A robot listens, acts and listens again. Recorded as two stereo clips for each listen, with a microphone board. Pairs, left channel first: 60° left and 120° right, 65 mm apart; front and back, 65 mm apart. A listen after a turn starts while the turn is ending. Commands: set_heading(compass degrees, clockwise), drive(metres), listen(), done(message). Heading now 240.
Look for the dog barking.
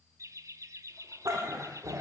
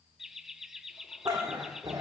set_heading(40)
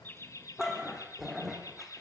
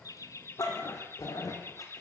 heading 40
set_heading(70)
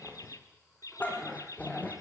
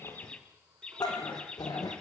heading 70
done("Found it: a dog barking, straight ahead, over 4 m away.")